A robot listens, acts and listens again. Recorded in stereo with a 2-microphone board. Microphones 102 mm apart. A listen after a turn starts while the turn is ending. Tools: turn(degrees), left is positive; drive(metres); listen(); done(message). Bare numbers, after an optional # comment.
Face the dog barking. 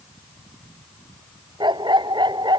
# The dog barking: about 50° right or 130° right.
turn(-50)
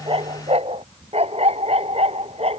# So it is at 85° right.
turn(-85)
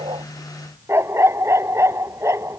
# The dog barking is now 25° right.
turn(-25)
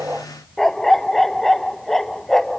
done("Found it: a dog barking, straight ahead.")